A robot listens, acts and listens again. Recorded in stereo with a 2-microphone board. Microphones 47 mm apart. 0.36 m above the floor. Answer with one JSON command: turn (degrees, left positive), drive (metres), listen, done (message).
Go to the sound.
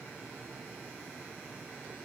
{"listen": true}
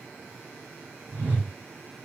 {"turn": -35}
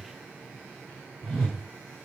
{"turn": -10}
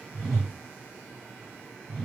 {"drive": 1.0}
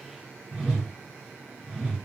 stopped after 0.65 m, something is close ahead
{"turn": -15}
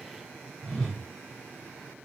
{"done": "Arrived at the whoosh, straight ahead."}